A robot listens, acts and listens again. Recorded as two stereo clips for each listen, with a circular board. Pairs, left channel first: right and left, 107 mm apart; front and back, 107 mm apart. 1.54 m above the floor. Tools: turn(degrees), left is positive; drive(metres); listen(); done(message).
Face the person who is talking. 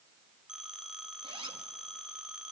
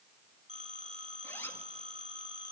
listen()
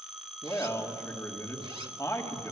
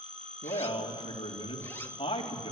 turn(degrees=-30)
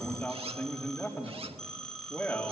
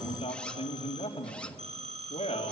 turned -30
turn(degrees=-15)
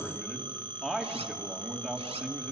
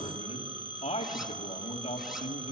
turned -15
done("Facing the man speaking.")